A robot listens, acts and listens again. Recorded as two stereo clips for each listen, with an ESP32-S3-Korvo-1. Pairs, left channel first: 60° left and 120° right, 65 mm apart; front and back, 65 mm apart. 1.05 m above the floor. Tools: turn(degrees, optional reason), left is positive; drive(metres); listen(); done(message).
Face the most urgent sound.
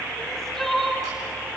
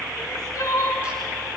turn(degrees=-25, reason="The crying: 25° right.")
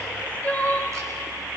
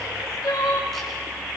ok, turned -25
done("Found it: crying, straight ahead, 2 to 4 m away.")